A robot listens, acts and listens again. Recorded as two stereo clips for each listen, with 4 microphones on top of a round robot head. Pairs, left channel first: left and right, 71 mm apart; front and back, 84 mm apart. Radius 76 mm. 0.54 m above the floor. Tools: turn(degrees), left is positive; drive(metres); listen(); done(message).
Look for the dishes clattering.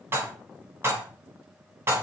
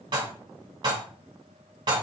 turn(degrees=-150)
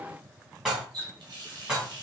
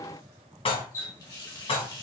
done("Found it: dishes clattering, straight ahead.")